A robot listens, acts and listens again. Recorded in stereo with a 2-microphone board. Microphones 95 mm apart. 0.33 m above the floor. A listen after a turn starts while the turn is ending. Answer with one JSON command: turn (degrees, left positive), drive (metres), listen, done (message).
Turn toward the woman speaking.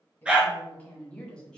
{"turn": 30}
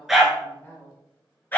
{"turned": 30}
{"turn": 160}
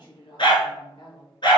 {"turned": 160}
{"turn": 65}
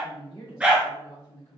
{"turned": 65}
{"turn": 30}
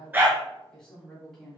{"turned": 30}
{"done": "Facing the woman speaking, 2 to 4 m away."}